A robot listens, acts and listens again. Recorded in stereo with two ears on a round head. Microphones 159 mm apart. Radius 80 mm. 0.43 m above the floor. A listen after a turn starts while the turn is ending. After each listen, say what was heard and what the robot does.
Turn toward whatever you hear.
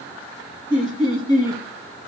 The laughter: about 25° left or 155° left. Turn 25° left.
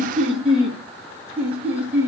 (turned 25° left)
So it is at 10° right. Turn 10° right.
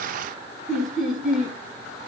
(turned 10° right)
Found it: laughter, straight ahead.